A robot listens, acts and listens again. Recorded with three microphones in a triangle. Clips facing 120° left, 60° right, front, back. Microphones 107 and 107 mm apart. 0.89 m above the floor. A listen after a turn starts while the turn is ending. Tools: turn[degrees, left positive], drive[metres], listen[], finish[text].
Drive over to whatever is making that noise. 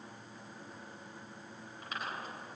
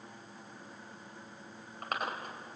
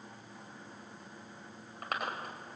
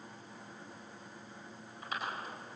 Thought: The chewing: 30° right.
Action: turn[-30]
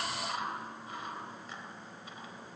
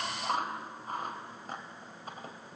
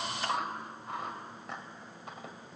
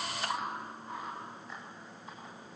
Thought: The chewing is now 15° right.
Action: turn[-15]
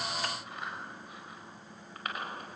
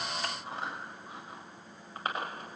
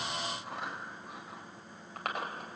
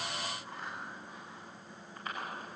Action: drive[1.0]
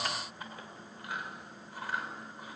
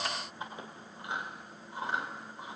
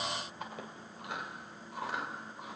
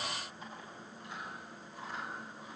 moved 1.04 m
Action: drive[1.0]
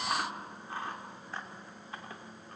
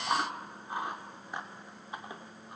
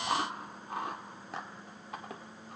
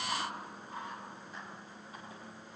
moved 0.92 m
Thought: The chewing is now 15° left.
Action: turn[15]
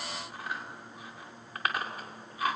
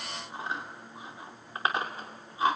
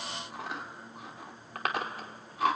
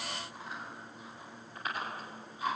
Action: drive[1.0]
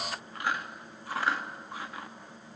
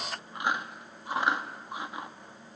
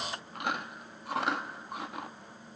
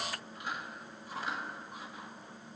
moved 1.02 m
Thought: The chewing is now 10° left.
Action: turn[10]
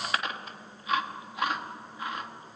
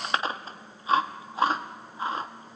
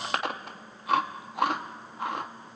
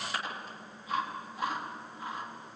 Action: drive[1.0]
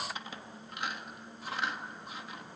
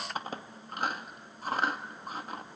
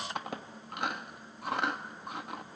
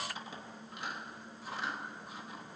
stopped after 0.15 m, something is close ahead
Thought: The chewing is now 15° right.
Action: turn[-15]
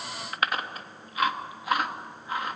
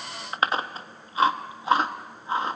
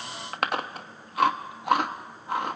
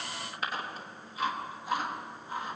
Action: finish[I am next to the chewing.]